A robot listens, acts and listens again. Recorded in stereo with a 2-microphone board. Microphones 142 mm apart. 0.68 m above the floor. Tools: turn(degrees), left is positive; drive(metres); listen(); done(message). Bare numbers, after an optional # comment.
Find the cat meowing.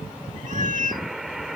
# The cat meowing: about 65° right or 115° right.
turn(-65)
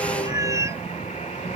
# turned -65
# So it is at 25° right.
turn(-25)
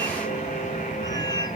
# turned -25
listen()
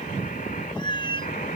# The cat meowing is now 35° left.
turn(35)
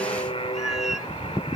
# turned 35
listen()
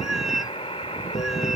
done("Facing the cat meowing.")